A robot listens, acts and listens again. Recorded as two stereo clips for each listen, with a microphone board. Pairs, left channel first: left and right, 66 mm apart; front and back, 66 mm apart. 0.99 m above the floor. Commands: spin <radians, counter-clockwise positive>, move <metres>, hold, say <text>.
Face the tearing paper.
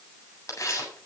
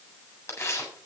spin 0.87
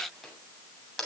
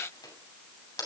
say Found it: tearing paper, straight ahead, over 4 m away.